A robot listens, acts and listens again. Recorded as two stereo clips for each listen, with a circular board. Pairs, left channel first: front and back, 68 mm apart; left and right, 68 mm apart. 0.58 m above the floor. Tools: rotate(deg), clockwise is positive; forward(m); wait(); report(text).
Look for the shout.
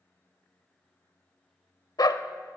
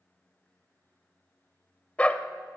wait()
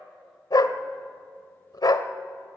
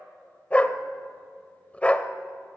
wait()
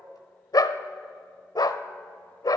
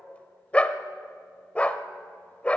report("I can't make out a shout to turn to.")